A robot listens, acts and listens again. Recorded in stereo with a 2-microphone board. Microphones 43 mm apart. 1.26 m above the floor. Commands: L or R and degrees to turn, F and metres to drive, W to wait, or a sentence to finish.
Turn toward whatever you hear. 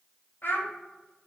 L50
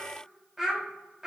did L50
R15
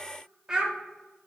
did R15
R15
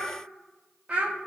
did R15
R30
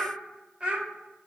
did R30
R20
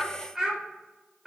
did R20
Facing the child speaking, 1 to 2 m away.